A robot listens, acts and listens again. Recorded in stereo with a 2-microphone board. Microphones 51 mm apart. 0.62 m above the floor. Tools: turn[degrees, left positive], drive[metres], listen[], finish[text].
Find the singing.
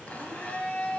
Action: listen[]
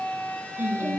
Thought: The singing: about 60° right or 120° right.
Action: turn[-60]
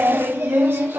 Thought: So it is at 55° right.
Action: turn[-55]
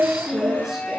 Thought: The singing is now 10° right.
Action: turn[-10]
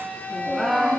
Action: finish[Found it: singing, straight ahead.]